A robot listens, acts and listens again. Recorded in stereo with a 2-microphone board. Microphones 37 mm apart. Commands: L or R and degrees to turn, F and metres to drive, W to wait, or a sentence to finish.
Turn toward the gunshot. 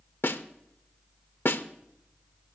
W
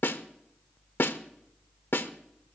W
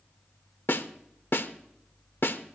I can't make out a gunshot, only a snare drum.